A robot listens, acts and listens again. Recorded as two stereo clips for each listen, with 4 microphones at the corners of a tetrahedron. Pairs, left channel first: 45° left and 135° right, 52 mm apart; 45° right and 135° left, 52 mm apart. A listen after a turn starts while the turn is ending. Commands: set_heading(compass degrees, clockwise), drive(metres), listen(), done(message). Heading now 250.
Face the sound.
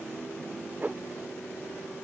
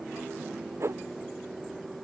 set_heading(85)
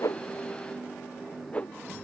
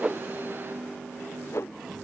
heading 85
set_heading(105)
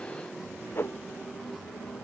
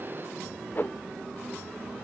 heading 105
done("Facing the whoosh.")